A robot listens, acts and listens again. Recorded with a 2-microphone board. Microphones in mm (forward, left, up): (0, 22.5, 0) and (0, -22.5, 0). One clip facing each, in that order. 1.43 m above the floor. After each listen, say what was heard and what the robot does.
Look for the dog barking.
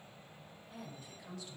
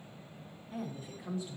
Keep listening.
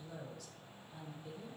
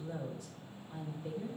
Keep listening.
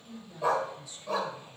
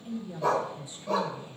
Turn 30° left.
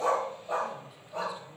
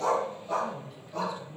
So it is at 160° left. Turn 160° left.
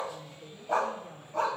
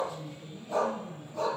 The dog barking is now 55° left. Turn 55° left.
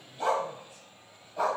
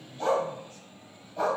Found it: a dog barking, straight ahead.